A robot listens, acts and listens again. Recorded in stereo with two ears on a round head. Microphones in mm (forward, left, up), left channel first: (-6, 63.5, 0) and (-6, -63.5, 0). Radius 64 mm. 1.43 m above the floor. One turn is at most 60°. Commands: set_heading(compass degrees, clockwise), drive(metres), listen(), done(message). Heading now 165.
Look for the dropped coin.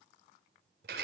listen()
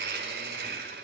listen()
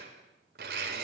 done("I can't make out a dropped coin to turn to.")